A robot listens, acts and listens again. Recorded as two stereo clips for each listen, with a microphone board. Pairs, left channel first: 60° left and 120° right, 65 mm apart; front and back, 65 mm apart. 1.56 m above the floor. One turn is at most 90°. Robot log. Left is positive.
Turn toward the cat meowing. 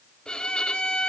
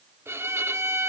cmd idle
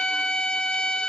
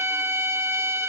cmd idle
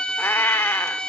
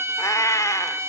note: The cat meowing: 25° left.
cmd yaw +25
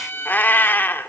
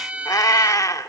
note: The cat meowing is now 10° left.
cmd yaw +10
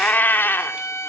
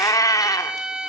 note: The cat meowing is now 10° left.
cmd yaw +10
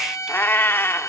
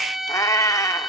note: The cat meowing is now 15° left.
cmd yaw +15
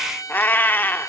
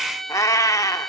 note: The cat meowing is now 10° left.
cmd yaw +10
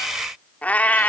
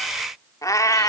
end: Found it: a cat meowing, straight ahead, 2 to 4 m away.